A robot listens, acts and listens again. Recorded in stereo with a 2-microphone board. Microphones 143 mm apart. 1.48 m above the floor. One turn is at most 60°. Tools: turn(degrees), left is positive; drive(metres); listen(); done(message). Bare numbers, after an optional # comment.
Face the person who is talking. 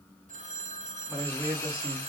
turn(-30)
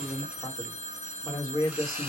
# So it is at 30° left.
turn(30)
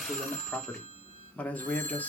# The man speaking is now 15° left.
turn(15)
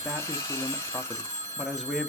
done("Found it: a man speaking, straight ahead, 1 to 2 m away.")